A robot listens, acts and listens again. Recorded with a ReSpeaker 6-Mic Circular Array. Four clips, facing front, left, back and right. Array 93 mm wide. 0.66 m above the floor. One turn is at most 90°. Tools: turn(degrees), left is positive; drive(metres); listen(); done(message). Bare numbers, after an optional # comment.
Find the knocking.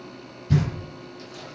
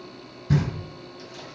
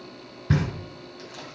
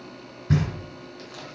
# The knocking: 160° right.
turn(-90)
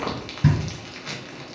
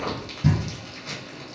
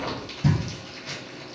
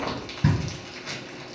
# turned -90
# The knocking is now 40° right.
turn(-40)
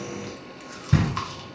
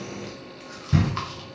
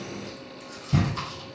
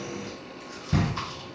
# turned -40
done("Found it: knocking, straight ahead.")